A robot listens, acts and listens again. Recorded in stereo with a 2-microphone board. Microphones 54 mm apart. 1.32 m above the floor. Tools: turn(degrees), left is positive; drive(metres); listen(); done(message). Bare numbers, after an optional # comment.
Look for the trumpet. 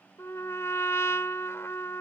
# The trumpet: about 55° left or 125° left.
turn(55)
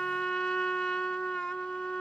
# So it is at 15° left.
turn(15)
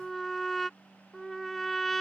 done("Found it: a trumpet, straight ahead.")